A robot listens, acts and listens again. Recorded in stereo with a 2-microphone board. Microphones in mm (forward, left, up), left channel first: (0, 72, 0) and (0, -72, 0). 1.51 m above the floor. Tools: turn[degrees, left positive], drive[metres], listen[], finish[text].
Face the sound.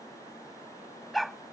Action: turn[30]
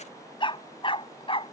Thought: So it is at 140° left.
Action: turn[140]
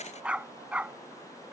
Thought: The dog barking is now 10° right.
Action: turn[-10]
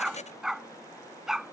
Action: finish[Facing the dog barking.]